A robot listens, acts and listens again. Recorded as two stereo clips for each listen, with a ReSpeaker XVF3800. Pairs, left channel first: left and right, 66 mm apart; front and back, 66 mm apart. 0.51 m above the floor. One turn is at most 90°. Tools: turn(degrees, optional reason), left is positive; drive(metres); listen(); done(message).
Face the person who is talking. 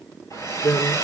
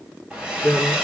turn(degrees=75, reason="The man speaking: 75° left.")
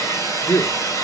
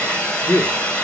turn(degrees=30, reason="The man speaking is now 30° left.")
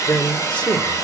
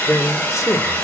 turn(degrees=20, reason="The man speaking is now 20° left.")
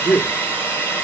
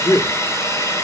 done("Found it: a man speaking, straight ahead, 1 to 2 m away.")